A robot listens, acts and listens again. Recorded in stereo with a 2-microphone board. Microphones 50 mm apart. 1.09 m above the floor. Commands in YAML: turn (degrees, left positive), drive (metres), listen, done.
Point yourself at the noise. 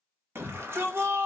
turn: -55
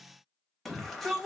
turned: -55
done: "Facing the shout."